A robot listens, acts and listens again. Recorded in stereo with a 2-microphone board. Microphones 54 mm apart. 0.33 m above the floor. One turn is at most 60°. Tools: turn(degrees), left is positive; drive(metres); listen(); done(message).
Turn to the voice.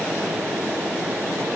listen()
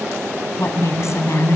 turn(degrees=60)
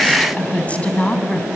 turn(degrees=30)
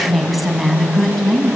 done("Facing the woman speaking, 2 to 4 m away.")